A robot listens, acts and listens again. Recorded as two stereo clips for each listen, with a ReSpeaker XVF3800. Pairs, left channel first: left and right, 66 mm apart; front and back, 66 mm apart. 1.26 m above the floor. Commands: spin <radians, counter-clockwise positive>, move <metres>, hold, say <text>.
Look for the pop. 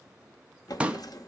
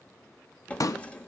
spin -0.35
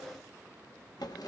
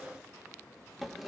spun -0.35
say I heard a pop from this way, but can't make it out now.